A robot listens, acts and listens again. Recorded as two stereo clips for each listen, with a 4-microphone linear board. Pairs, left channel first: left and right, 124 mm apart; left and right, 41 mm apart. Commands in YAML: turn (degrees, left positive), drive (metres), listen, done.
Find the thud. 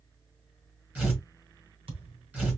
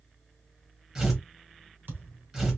turn: -50
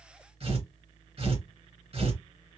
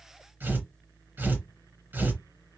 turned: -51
listen: true
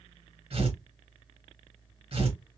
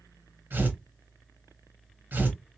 done: "I heard a thud, but can't make it out now. It was about straight ahead or 75° right."